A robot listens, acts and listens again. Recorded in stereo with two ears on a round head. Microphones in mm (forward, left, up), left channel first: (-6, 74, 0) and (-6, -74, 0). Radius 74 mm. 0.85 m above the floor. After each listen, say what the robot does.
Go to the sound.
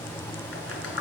Turn 90° left.
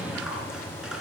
Drive 1.0 m forward.
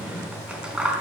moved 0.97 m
Drive 1.0 m forward.
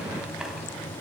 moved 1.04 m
Keep listening.
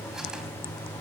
Keep listening.
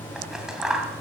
Drive 1.0 m forward.
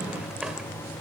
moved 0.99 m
Keep listening.
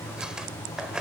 Drive 1.0 m forward.
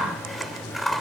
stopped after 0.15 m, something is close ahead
Arrived at the scissors, straight ahead.